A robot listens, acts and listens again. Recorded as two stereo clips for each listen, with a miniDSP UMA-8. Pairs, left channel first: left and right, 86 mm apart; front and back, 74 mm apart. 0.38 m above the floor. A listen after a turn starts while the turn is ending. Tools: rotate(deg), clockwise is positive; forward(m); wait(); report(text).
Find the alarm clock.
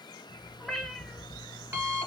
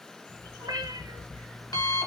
rotate(30)
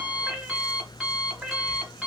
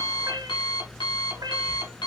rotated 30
report("Found it: an alarm clock, straight ahead, 1 to 2 m away.")